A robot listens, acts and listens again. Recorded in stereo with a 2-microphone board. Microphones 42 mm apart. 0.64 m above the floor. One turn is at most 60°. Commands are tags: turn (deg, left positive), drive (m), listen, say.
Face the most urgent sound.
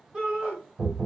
<turn deg="-15"/>
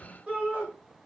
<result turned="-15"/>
<turn deg="-60"/>
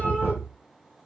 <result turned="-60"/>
<turn deg="-60"/>
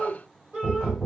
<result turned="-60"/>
<turn deg="-30"/>
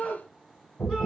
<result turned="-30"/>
<say>Facing the shout.</say>